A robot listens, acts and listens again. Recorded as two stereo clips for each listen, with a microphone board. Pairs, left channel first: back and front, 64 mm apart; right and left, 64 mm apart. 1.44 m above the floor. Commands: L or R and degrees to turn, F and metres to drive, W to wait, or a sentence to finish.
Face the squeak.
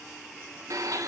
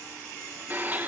W
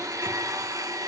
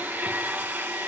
W
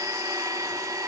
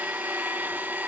I can't make out a squeak, only a blender.